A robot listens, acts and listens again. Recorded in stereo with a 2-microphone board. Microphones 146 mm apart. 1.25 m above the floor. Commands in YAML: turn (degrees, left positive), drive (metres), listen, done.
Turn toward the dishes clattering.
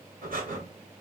listen: true
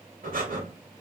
listen: true
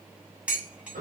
turn: -30
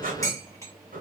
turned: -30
turn: 20
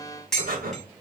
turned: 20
done: "Found it: dishes clattering, straight ahead, 1 to 2 m away."